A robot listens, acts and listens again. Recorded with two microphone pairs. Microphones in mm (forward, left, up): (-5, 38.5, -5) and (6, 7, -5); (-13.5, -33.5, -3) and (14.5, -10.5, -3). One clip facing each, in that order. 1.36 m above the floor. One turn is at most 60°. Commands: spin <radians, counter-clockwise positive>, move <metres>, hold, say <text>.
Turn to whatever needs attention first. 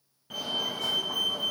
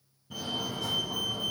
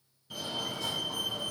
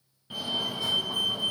spin 1.05
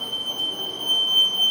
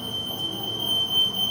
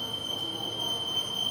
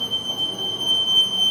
spin 1.05
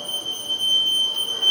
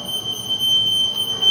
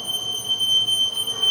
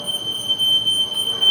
spin 0.17
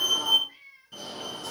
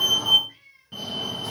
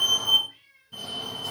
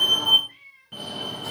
say Facing the fire alarm, 2 to 4 m away.